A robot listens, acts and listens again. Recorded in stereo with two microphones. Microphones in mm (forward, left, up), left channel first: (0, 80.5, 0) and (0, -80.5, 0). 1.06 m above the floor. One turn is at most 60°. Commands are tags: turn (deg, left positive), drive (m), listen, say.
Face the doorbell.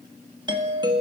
<turn deg="-30"/>
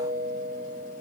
<turn deg="-60"/>
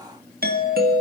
<turn deg="-60"/>
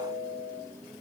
<turn deg="-20"/>
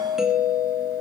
<say>Facing the doorbell.</say>